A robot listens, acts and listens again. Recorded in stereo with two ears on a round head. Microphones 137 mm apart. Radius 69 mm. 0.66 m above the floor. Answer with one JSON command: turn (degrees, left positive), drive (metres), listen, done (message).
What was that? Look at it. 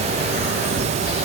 {"listen": true}
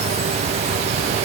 {"listen": true}
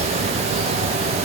{"done": "I can't make out anything to turn to."}